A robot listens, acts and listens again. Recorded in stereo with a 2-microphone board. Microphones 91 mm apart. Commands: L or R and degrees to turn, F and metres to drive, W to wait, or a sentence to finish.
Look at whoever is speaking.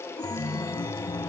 W
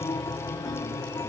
W
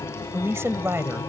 R30
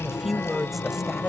Facing the woman speaking.